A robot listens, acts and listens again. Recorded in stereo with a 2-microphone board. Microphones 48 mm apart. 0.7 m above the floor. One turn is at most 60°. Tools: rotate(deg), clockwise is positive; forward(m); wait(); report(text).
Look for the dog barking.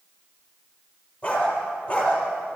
rotate(-30)
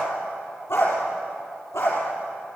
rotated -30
rotate(-60)
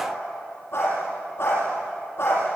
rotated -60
rotate(-50)
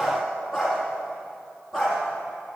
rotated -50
report("Facing the dog barking, over 4 m away.")